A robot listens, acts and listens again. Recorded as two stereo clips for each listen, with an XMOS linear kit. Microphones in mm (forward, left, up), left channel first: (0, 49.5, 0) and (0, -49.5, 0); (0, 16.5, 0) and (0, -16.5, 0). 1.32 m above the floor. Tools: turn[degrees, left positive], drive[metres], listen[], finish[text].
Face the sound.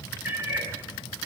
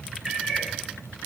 Thought: The cat meowing: about 20° right or 160° right.
Action: turn[-20]
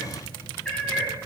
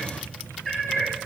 Thought: So it is at 10° left.
Action: turn[10]
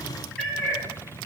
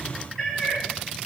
Thought: The cat meowing is now 10° left.
Action: turn[10]
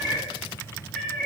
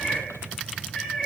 Action: finish[Found it: a cat meowing, straight ahead, over 4 m away.]